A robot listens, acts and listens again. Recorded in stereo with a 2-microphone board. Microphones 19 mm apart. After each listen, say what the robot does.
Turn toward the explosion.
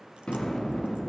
Turn 65° left.
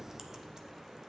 Keep listening.
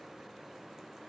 I heard an explosion, but can't make it out now. It was about straight ahead or 50° left.